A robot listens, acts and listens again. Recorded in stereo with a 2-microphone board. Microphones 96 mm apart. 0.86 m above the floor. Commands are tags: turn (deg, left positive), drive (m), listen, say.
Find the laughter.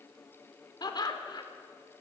<turn deg="50"/>
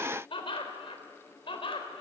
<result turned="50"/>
<turn deg="70"/>
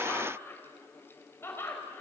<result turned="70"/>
<turn deg="25"/>
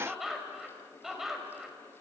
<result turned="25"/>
<say>Found it: laughter, straight ahead, over 4 m away.</say>